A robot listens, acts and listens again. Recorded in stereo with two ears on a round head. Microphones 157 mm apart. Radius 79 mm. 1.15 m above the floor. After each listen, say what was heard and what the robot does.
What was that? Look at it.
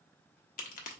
The crack: about 50° left or 130° left. Turn 50° left.
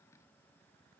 Keep listening.
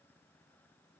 I heard a crack, but can't make it out now. It was about straight ahead or 80° left.